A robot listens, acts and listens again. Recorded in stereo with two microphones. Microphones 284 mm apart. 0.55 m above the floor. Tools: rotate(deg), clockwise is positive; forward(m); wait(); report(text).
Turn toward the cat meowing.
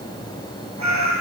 rotate(75)
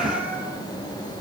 report("Found it: a cat meowing, straight ahead, over 4 m away.")